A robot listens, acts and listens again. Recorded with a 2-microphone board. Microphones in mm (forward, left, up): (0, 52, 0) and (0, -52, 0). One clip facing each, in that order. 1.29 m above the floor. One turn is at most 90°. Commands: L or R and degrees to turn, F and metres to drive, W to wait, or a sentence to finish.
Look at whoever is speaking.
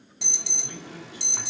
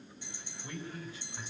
L30
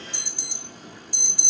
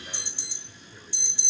W
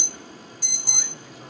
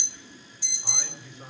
R25
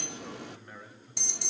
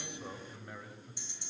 R15
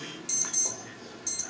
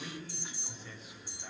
Found it: a man speaking, straight ahead.